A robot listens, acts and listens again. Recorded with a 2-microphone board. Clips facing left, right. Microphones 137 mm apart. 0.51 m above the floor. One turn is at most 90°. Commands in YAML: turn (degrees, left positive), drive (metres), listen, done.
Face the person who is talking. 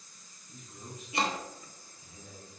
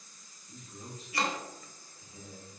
turn: -35
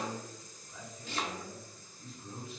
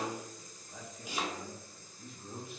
turn: -90
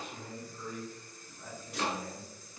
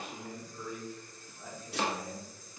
turn: -15
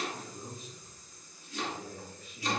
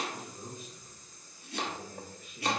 done: "Found it: a man speaking, straight ahead."